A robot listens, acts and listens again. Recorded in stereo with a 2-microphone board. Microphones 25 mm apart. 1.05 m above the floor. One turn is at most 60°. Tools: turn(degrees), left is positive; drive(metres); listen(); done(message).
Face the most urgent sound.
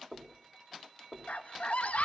turn(degrees=60)
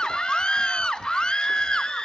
turn(degrees=40)
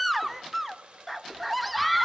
done("Found it: a scream, straight ahead, 1 to 2 m away.")